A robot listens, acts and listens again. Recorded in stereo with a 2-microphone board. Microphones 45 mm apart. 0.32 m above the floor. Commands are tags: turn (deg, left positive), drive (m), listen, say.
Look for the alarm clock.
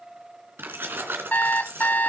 <turn deg="45"/>
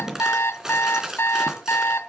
<turn deg="90"/>
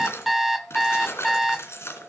<say>Found it: an alarm clock, straight ahead, under 1 m away.</say>